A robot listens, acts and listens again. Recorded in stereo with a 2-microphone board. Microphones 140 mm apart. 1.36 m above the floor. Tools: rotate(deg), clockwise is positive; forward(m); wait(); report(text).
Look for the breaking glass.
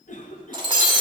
rotate(35)
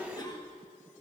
wait()
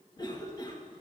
report("I heard breaking glass, but can't make it out now. It was about straight ahead or 110° right.")